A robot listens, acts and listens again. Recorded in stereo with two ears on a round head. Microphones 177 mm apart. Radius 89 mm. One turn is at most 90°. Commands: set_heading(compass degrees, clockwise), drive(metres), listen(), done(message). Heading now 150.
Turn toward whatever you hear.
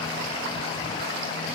listen()
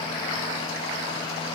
listen()
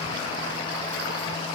done("I can't make out anything to turn to.")